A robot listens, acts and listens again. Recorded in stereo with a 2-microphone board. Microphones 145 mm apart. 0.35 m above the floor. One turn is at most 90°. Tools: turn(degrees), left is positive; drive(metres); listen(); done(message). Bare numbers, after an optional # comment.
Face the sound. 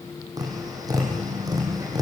# The tapping: about 25° right or 155° right.
turn(-25)
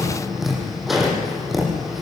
done("Found it: tapping, straight ahead, over 4 m away.")